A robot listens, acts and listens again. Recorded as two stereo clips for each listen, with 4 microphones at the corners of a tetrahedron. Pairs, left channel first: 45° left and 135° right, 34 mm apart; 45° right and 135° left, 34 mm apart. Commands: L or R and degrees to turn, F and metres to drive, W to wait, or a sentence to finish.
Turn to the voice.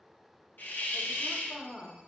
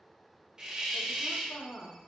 R20
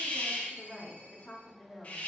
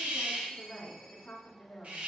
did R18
Found it: a woman speaking, straight ahead.